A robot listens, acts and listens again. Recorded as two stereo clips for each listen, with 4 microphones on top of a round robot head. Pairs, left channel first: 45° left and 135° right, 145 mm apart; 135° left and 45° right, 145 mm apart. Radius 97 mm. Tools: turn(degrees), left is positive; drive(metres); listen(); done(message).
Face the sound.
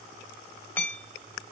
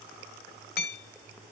turn(degrees=125)
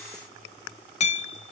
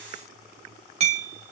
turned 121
done("Facing the hammering.")